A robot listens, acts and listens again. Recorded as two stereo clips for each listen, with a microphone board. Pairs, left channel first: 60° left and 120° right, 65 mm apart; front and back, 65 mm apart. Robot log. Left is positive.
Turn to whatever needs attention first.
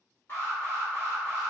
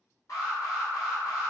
note: The alarm: 15° left.
cmd yaw +15
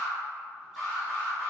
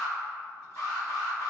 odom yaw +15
end: Facing the alarm, 1 to 2 m away.